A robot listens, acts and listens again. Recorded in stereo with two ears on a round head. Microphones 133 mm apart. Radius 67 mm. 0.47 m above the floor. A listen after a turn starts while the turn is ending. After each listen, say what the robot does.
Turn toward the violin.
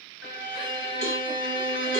Turn 60° left.
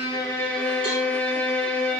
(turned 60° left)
Found it: a violin, straight ahead, 1 to 2 m away.